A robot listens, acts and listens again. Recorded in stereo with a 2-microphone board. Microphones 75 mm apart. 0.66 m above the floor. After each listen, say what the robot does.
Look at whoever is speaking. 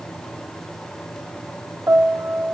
Keep listening.
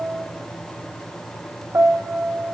Keep listening.
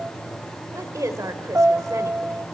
Turn 50° right.
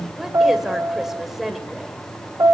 Facing the woman speaking, 2 to 4 m away.